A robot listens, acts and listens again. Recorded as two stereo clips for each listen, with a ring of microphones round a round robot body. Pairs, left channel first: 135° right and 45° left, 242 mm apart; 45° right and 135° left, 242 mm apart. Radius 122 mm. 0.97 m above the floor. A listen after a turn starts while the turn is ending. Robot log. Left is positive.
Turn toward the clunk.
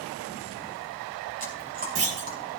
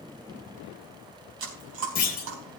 note: The clunk: 10° left.
cmd yaw +10
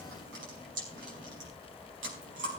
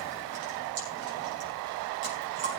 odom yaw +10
end: Facing where the clunk came from. I can't hear it now.